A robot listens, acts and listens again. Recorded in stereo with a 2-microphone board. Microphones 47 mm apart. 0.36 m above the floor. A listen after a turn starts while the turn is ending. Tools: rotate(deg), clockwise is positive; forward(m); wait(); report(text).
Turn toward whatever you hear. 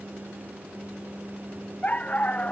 rotate(-30)
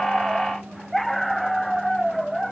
report("Facing the dog barking.")